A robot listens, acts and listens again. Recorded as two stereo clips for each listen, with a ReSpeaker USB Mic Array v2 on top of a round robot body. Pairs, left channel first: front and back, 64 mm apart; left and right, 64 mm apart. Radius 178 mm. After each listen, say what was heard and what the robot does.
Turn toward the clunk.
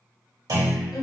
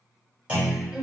The clunk: 160° right. Turn 160° right.
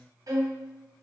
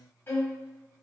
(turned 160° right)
I heard a clunk from this way, but can't make it out now.